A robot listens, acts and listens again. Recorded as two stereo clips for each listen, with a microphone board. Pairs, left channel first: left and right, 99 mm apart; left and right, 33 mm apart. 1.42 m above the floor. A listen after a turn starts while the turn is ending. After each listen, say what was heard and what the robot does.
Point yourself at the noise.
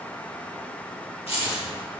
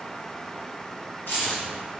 Turn 90° left.
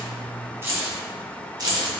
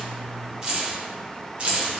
So it is at 45° right. Turn 45° right.
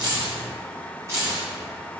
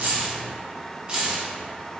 The keys jangling is now 35° right. Turn 35° right.
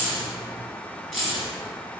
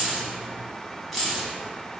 Found it: keys jangling, straight ahead, 1 to 2 m away.